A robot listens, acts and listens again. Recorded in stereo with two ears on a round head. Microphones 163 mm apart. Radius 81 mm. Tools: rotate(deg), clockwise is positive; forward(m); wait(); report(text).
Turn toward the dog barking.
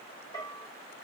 wait()
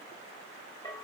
wait()
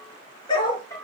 rotate(-30)
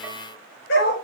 rotate(-120)
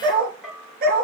rotate(50)
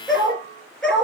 report("Found it: a dog barking, straight ahead, over 4 m away.")